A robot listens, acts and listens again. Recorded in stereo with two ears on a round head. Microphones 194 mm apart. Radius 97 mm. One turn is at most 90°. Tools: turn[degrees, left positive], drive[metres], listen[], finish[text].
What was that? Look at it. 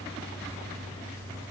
Action: listen[]
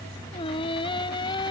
Thought: The singing: about 25° left or 155° left.
Action: turn[25]
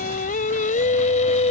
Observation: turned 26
Thought: The singing: about 35° left or 145° left.
Action: turn[35]
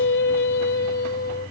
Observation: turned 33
Thought: So it is at 130° left.
Action: turn[90]
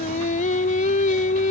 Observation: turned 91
Thought: The singing is now 40° left.
Action: turn[40]
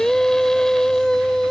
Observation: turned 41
Action: finish[Found it: singing, straight ahead.]